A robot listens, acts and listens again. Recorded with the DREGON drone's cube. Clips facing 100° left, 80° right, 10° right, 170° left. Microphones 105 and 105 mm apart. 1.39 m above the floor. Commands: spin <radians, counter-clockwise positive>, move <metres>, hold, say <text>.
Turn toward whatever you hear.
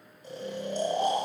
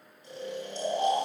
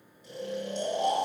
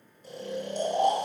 spin 2.36
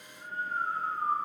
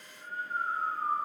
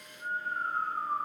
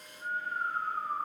spin 0.70
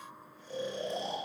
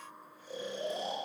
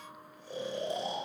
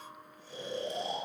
say Facing the snoring.